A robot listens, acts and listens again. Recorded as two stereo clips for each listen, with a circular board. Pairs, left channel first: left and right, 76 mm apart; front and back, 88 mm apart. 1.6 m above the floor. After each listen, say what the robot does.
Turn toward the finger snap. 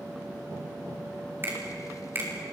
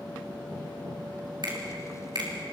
Turn 150° right.
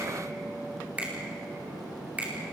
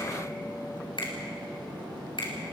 Turn 20° right.
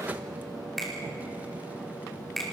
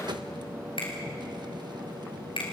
Facing the finger snap.